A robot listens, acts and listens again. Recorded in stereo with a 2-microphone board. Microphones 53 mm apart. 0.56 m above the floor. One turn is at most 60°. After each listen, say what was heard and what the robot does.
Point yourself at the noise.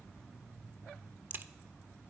The crack: about 40° right or 140° right. Turn 40° right.
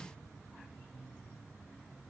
Keep listening.
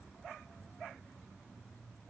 I heard a crack, but can't make it out now. It was about straight ahead or 100° right.